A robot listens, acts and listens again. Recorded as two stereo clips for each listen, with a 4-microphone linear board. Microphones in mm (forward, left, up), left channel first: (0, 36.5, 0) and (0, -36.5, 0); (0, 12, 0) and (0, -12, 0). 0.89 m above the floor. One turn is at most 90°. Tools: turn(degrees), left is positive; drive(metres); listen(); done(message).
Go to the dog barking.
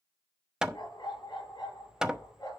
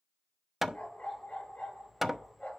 turn(degrees=90)
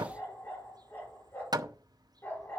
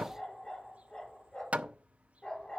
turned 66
turn(degrees=30)
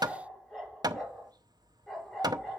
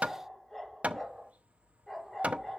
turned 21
turn(degrees=10)
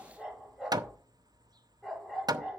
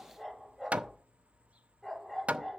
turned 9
drive(metres=1.0)
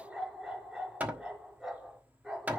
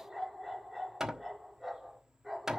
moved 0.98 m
drive(metres=1.0)
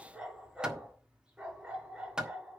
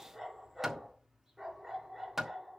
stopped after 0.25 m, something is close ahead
turn(degrees=-10)
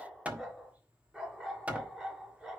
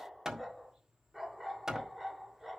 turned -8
done("Something is in my way. I am facing the dog barking but have not reached it.")